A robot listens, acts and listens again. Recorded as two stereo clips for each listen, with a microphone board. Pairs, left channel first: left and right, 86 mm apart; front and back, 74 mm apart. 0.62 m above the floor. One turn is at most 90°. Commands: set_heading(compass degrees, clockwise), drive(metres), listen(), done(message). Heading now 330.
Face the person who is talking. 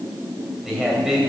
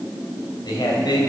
set_heading(340)
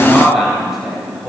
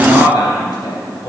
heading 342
set_heading(352)
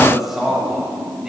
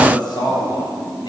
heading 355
done("Found it: a man speaking, straight ahead, 2 to 4 m away.")